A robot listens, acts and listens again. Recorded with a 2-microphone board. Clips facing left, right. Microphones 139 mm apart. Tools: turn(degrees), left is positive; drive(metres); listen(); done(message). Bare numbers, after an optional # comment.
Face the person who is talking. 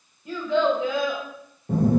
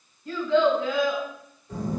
# The child speaking: about 20° left or 160° left.
turn(20)
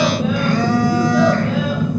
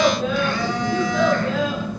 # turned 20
listen()
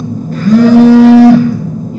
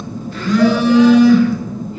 listen()
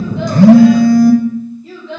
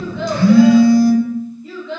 # The child speaking: about 20° left or 160° left.
turn(20)
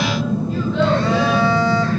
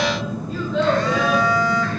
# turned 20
listen()
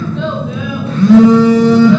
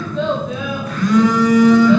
listen()
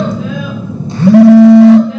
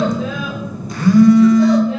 done("I heard a child speaking, but can't make it out now. It was about straight ahead or 140° left.")